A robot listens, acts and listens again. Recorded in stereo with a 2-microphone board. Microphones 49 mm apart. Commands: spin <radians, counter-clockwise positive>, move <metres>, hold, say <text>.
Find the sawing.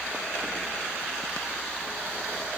hold
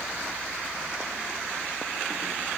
hold
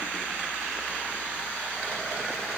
say I can't make out sawing to turn to.